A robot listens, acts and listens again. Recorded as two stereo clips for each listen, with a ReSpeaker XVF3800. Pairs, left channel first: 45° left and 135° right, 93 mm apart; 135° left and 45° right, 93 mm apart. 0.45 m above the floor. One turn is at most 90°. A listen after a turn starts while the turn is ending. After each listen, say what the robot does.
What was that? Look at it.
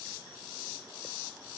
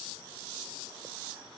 Keep listening.
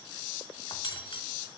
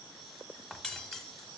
Turn 50° left.
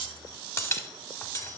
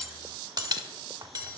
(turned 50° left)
Turn 10° right.
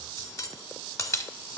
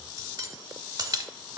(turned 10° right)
Found it: cutlery clinking, straight ahead, under 1 m away.